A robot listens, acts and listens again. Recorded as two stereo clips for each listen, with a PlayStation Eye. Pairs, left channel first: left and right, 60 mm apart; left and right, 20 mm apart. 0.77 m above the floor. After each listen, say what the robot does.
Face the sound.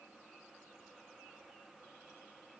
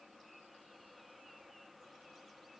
Keep listening.
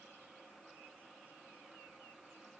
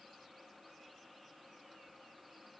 Keep listening.
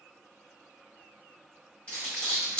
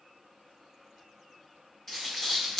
Turn 20° left.
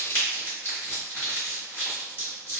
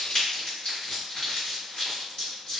Turn 135° left.
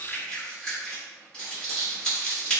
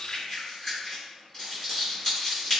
Turn 15° left.
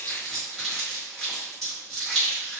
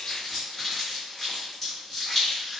Found it: crumpling, straight ahead.